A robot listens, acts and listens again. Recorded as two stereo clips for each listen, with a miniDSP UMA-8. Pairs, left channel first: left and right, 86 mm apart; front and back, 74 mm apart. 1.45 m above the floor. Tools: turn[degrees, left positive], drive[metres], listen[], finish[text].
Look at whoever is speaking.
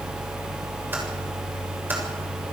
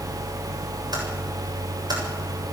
Action: listen[]
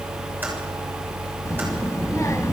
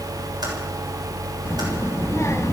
Thought: The child speaking: 45° left.
Action: turn[45]
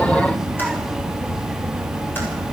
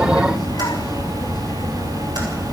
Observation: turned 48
Action: finish[Found it: a child speaking, straight ahead.]